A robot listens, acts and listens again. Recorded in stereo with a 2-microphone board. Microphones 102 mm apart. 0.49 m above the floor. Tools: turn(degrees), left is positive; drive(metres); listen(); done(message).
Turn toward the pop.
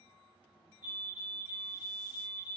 listen()
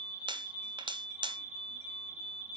turn(degrees=-50)
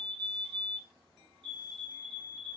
listen()
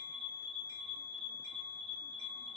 done("I heard a pop, but can't make it out now. It was about straight ahead or 80° right.")